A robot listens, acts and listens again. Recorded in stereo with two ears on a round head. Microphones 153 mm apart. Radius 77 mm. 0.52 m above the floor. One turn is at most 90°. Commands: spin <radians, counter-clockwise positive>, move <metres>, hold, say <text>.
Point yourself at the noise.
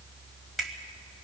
spin 0.52
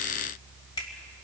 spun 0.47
spin 1.57
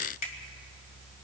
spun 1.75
spin 0.87
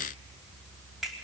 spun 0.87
say Facing the finger snap.